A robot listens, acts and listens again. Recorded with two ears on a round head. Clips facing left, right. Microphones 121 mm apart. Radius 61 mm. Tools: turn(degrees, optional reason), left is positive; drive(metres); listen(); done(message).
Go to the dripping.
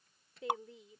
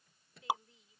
turn(degrees=-30)
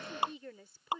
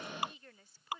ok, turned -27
turn(degrees=25, reason="So it is at 25° left.")
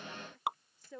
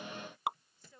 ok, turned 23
drive(metres=1.0)
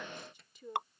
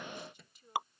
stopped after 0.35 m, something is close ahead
done("Blocked. The dripping is further on, straight ahead.")